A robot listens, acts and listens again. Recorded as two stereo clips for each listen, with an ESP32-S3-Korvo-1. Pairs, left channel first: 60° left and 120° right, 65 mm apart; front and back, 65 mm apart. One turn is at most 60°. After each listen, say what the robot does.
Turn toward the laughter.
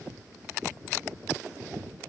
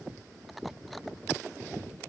Keep listening.
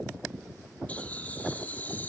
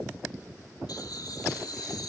Found it: laughter, straight ahead.